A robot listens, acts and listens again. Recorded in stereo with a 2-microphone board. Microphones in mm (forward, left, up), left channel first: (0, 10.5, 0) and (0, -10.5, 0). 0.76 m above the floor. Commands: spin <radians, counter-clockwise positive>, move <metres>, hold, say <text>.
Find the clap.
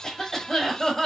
hold
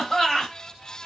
hold
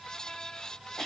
say I can't make out a clap to turn to.